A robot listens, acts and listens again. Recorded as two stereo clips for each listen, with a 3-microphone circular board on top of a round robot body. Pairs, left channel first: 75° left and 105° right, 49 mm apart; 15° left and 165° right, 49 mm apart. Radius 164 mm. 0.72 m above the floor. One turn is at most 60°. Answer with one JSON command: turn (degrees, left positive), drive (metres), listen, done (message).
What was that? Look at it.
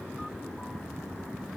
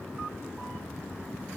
{"listen": true}
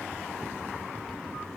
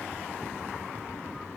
{"listen": true}
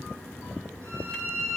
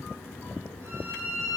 {"turn": -60}
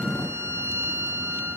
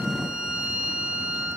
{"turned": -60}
{"turn": -60}
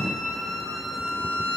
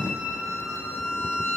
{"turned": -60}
{"turn": -10}
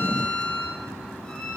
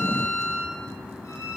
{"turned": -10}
{"done": "Facing the violin, over 4 m away."}